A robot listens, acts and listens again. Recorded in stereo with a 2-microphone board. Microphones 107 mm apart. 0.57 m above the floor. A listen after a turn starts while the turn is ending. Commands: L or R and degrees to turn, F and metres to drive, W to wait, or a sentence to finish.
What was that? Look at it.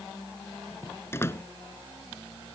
L20
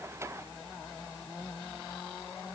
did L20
W
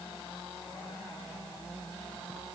I heard a door slam, but can't make it out now. It was about straight ahead or 140° left.